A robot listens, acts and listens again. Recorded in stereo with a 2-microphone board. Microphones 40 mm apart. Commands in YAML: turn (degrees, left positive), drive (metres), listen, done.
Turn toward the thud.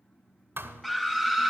turn: -70
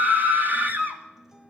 listen: true
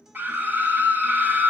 done: "I heard a thud, but can't make it out now. It was about straight ahead or 40° right."